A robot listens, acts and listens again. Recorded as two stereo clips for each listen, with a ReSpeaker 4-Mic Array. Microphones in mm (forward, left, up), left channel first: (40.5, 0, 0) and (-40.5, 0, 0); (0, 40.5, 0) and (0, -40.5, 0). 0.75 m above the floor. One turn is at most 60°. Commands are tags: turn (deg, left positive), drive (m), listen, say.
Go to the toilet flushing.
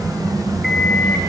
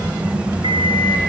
<listen/>
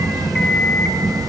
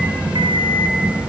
<listen/>
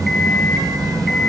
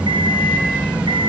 <say>I can't make out a toilet flushing to turn to.</say>